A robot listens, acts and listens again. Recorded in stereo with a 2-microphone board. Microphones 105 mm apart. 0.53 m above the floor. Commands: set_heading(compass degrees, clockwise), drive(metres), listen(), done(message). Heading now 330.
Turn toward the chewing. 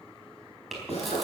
set_heading(300)
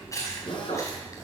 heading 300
set_heading(150)
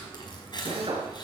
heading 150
set_heading(105)
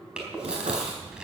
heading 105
set_heading(115)
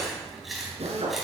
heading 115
done("Facing the chewing.")